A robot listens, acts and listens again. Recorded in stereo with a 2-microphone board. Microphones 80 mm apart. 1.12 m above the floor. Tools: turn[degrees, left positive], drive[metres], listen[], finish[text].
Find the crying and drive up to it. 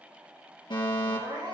Action: turn[-90]
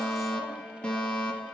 Action: listen[]
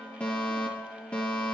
Action: listen[]
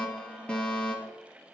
Action: finish[I heard crying from this way, but can't make it out now. I did not reach it.]